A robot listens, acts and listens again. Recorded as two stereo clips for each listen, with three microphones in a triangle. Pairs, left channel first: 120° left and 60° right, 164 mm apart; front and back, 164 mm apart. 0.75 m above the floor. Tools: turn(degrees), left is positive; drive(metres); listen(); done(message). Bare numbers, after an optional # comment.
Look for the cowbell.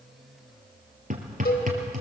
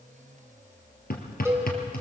# The cowbell: 105° left.
turn(105)
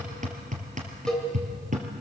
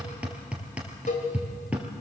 # The cowbell is now 35° left.
turn(35)
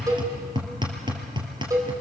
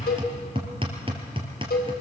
# The cowbell is now 10° left.
turn(10)
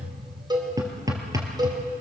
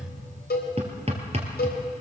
done("Facing the cowbell, 2 to 4 m away.")